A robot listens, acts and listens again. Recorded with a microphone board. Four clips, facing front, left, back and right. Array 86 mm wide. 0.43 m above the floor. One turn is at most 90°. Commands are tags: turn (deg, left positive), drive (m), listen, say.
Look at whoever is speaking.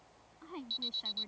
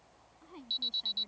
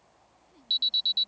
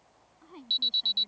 <turn deg="-10"/>
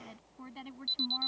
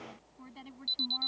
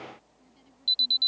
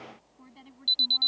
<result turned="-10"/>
<turn deg="15"/>
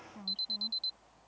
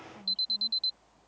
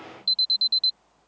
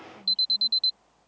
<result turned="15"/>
<listen/>
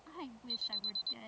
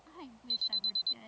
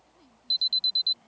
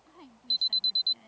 <turn deg="25"/>
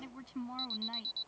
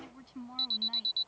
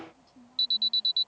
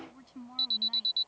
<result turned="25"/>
<turn deg="10"/>
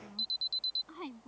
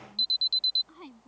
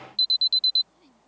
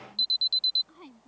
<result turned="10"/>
<turn deg="10"/>
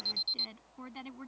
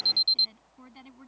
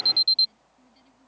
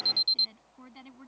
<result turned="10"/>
<say>Facing the woman speaking.</say>